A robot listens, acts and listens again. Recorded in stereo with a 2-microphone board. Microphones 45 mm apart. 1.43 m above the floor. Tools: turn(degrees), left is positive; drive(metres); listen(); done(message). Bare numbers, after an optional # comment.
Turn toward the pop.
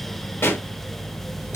# The pop: about 60° left or 120° left.
turn(60)
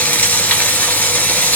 listen()
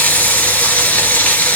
done("I heard a pop, but can't make it out now. It was about straight ahead or 60° left.")